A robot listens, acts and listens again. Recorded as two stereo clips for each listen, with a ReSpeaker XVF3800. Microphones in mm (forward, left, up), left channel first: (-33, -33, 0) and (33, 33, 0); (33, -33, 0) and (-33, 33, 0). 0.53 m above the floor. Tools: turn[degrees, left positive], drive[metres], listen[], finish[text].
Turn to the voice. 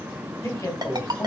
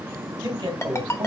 Thought: The man speaking: 175° left.
Action: turn[175]
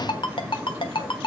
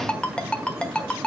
Action: listen[]
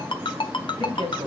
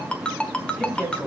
Thought: The man speaking is now 40° left.
Action: turn[40]
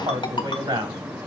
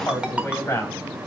Thought: The man speaking is now 10° left.
Action: turn[10]
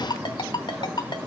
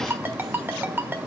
Action: listen[]
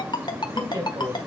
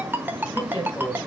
Action: finish[Found it: a man speaking, straight ahead, 2 to 4 m away.]